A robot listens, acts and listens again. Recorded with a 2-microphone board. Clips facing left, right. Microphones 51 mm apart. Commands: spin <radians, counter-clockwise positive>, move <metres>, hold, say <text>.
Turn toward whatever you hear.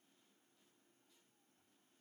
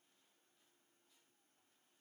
hold
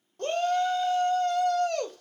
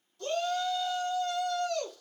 spin 0.87
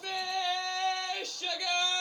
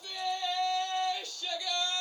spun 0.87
spin 1.22
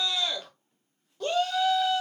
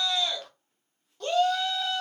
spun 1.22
say Found it: a shout, straight ahead.